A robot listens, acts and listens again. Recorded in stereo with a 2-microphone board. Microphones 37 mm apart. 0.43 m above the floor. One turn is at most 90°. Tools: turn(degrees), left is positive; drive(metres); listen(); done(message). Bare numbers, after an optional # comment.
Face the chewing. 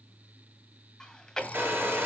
# The chewing: about 15° left or 165° left.
turn(15)
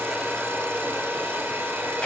listen()
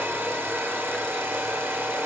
listen()
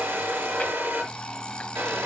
done("I heard chewing, but can't make it out now. It was about straight ahead or 150° left.")